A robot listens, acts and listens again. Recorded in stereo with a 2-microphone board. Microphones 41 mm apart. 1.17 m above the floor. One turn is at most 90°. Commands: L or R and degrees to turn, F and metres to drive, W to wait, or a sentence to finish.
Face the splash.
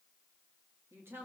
W
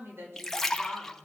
L30
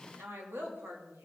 W
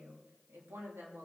I heard a splash, but can't make it out now. It was about 20° right or 140° left.